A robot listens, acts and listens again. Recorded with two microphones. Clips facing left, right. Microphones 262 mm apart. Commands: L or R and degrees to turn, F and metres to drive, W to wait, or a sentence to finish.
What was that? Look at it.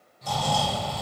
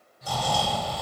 R30
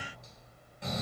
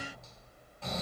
L20
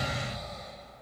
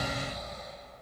Facing the snoring.